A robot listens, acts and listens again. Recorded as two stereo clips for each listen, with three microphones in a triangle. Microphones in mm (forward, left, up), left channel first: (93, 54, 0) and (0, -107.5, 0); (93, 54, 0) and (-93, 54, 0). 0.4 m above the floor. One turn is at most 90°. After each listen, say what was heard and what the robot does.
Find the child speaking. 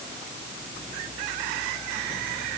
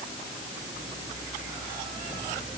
Keep listening.
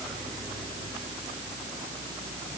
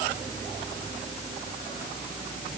Keep listening.
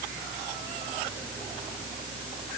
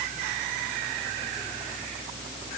I can't make out a child speaking to turn to.